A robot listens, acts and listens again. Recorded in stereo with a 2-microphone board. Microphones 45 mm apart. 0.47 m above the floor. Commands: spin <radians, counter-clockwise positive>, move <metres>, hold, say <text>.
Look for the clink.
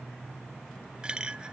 spin -0.35
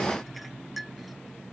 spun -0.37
say Facing the clink.